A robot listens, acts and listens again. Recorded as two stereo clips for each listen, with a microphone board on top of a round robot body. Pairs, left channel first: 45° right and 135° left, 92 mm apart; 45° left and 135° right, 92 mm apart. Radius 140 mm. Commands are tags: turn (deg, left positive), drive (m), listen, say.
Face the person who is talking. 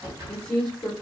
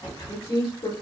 <turn deg="40"/>
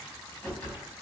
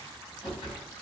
<listen/>
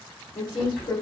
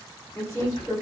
<say>Facing the woman speaking.</say>